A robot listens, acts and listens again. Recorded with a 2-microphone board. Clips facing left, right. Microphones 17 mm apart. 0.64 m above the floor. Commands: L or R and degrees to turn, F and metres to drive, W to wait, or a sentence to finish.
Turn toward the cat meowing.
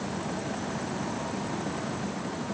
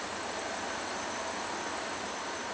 W
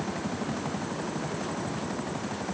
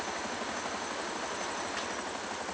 W
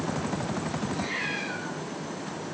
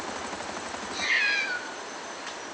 R65
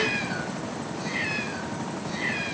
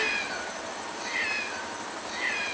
Found it: a cat meowing, straight ahead.